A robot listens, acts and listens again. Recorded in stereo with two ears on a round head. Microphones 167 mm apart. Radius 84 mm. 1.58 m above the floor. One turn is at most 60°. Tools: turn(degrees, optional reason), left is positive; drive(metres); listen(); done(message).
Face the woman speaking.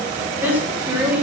turn(degrees=-30)
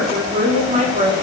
turn(degrees=-60, reason="So it is at 140° right.")
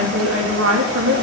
turn(degrees=-60, reason="The woman speaking is now 85° right.")
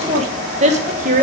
turn(degrees=-40, reason="The woman speaking is now 40° right.")
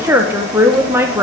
turn(degrees=-10, reason="The woman speaking is now 10° right.")
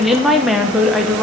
done("Facing the woman speaking.")